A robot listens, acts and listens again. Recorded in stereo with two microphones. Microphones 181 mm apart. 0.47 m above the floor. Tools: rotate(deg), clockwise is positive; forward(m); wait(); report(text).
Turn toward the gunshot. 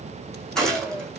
rotate(-30)
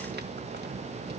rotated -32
wait()
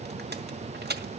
report("I heard a gunshot, but can't make it out now. It was about 30° right or 145° left.")